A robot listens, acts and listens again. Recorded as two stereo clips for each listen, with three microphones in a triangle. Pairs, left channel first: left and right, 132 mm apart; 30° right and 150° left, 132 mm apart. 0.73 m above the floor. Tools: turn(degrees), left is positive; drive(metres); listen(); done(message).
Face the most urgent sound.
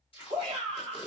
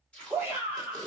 turn(degrees=-140)
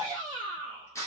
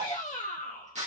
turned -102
turn(degrees=-35)
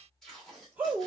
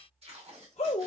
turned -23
turn(degrees=-15)
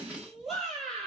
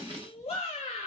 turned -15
done("Found it: a shout, straight ahead, 2 to 4 m away.")